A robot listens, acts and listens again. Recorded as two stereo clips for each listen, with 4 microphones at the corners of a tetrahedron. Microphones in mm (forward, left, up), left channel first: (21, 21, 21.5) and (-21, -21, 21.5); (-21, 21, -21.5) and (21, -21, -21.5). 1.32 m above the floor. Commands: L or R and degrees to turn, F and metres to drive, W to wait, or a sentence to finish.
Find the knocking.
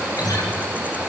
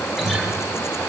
W
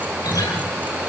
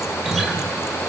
W
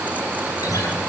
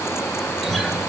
I can't make out knocking to turn to.